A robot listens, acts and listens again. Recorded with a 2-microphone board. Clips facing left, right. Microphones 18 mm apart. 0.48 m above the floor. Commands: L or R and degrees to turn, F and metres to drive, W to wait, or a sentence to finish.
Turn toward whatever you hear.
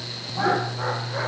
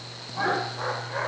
R30
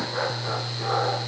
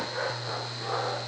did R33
L20
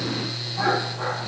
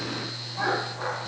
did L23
Facing the laughter, 2 to 4 m away.